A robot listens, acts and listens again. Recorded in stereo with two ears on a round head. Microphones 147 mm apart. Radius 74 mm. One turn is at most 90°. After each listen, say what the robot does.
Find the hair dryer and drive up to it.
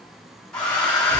Turn 30° left.
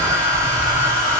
Turn 25° right.
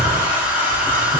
Turn 10° right.
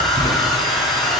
Drive 1.0 m forward.
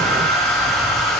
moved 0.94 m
Drive 1.0 m forward.
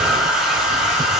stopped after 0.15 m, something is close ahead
Arrived at the hair dryer, straight ahead.